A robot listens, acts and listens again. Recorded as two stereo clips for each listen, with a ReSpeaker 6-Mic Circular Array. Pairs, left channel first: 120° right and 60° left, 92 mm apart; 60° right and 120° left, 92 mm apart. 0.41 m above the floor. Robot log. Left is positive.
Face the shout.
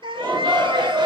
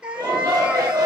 note: The shout: 80° left.
cmd yaw +80
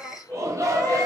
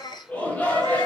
note: The shout is now 10° left.
cmd yaw +10
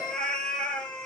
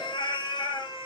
cmd idle
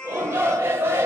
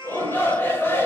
end: Facing the shout, 1 to 2 m away.